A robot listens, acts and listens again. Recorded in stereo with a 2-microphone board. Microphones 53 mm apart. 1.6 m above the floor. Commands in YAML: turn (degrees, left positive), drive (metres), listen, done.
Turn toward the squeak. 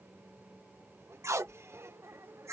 turn: -60
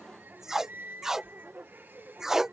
turn: -45
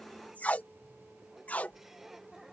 done: "Found it: a squeak, straight ahead."